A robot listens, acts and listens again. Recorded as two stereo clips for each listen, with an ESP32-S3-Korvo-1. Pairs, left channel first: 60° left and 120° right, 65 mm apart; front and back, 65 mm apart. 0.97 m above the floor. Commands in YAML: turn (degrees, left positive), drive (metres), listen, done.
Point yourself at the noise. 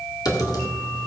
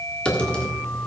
turn: 75
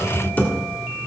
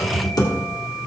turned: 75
done: "Found it: typing on a keyboard, straight ahead."